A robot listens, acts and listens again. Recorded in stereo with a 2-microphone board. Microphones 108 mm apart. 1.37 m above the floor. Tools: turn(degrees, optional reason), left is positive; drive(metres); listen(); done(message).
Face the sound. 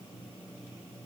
listen()
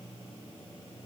listen()
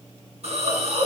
turn(degrees=-70, reason="The hiss: about 70° right or 110° right.")
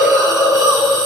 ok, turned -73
done("Facing the hiss, over 4 m away.")